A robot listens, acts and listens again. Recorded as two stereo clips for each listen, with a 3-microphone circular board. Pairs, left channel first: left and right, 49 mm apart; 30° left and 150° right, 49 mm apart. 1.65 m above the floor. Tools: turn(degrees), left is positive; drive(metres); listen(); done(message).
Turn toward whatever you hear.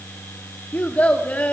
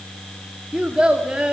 turn(degrees=145)
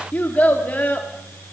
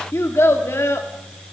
turn(degrees=40)
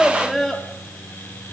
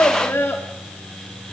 done("Facing the child speaking, 2 to 4 m away.")